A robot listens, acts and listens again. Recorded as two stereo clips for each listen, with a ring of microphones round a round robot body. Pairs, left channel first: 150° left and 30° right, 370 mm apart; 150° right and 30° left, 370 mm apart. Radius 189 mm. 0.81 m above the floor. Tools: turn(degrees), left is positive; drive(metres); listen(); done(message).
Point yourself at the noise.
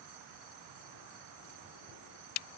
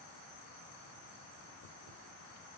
listen()
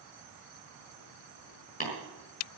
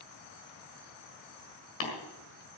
turn(degrees=-140)
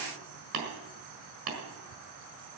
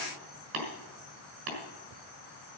done("Facing the tapping, over 4 m away.")